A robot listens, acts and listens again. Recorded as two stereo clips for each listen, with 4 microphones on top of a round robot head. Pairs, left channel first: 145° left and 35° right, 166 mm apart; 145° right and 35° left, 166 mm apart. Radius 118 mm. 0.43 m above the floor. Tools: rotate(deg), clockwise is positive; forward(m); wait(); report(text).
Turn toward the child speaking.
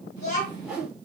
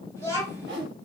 rotate(-110)
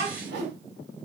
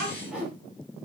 report("Found it: a child speaking, straight ahead.")